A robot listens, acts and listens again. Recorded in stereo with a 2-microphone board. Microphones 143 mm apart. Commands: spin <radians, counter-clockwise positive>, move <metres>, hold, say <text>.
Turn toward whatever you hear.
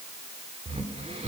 spin -0.87
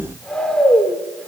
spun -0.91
say Facing the snoring.